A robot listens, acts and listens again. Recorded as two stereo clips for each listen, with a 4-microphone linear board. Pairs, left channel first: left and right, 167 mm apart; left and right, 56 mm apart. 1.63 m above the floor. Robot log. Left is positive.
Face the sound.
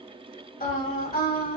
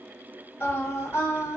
note: The singing: about 65° left or 115° left.
cmd yaw +65
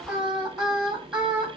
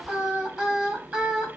end: Facing the singing.